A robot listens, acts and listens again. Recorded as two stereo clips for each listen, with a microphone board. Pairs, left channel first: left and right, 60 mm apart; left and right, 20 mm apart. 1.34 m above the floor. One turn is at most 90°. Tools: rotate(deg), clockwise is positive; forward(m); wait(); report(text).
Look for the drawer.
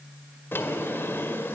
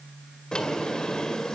rotate(-40)
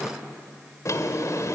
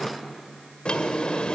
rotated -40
rotate(-90)
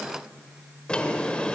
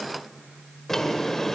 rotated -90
rotate(-20)
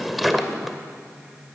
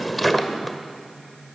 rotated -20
report("Facing the drawer, 1 to 2 m away.")